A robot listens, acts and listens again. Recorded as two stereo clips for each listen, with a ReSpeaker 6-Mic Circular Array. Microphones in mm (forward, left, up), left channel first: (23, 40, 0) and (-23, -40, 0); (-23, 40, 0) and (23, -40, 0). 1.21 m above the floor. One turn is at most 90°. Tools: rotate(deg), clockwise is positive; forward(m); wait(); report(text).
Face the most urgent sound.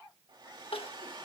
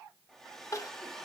rotate(-65)
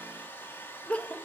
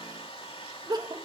rotate(15)
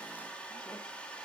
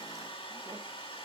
wait()
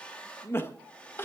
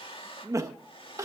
report("Found it: crying, straight ahead.")